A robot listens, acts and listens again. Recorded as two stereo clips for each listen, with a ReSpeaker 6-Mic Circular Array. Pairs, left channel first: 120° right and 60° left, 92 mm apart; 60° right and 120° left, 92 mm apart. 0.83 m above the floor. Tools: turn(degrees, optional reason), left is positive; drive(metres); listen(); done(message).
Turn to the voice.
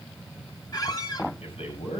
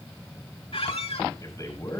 turn(degrees=-115, reason="The man speaking: 115° right.")
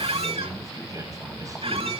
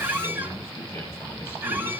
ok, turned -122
listen()
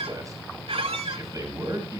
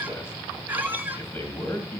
done("Facing the man speaking, over 4 m away.")